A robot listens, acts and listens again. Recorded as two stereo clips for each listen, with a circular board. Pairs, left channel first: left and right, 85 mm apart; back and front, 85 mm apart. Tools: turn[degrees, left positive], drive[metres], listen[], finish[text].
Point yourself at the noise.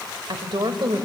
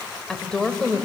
Thought: The woman speaking: 105° right.
Action: turn[-105]
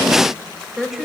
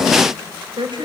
Action: finish[Found it: a woman speaking, straight ahead.]